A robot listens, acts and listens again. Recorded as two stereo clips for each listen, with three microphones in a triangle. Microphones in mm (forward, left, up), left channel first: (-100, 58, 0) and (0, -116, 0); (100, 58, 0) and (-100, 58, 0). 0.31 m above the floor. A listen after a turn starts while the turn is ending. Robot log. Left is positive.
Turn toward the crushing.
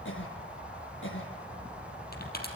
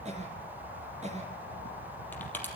note: The crushing: 80° left.
cmd yaw +80
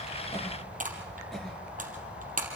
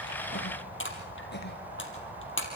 note: The crushing is now 10° right.
cmd yaw -10
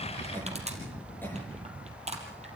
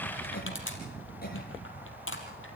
end: Found it: crushing, straight ahead, 2 to 4 m away.